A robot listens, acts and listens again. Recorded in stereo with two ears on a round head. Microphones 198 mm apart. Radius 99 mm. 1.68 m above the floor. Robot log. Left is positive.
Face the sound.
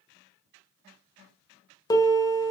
note: The piano: about 15° left or 165° left.
cmd yaw +15
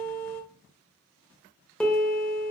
end: Found it: a piano, straight ahead.